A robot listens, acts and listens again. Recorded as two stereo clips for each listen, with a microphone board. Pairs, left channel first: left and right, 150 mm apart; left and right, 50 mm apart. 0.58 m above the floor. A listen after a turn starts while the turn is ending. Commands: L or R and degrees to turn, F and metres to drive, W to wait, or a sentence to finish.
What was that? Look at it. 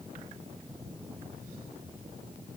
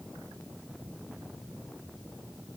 W
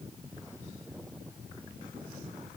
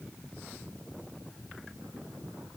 W
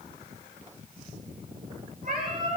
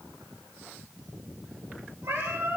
R65
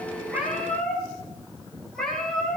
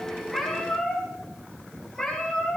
Facing the cat meowing.